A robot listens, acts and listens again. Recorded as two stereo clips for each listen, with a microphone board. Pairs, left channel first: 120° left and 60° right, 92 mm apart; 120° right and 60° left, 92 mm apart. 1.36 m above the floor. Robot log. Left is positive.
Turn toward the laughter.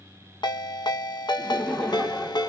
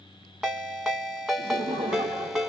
note: The laughter: 40° left.
cmd yaw +40
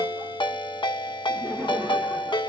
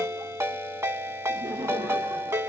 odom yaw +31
note: The laughter is now 10° left.
cmd yaw +10
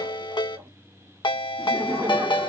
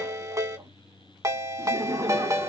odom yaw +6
end: Found it: laughter, straight ahead, 1 to 2 m away.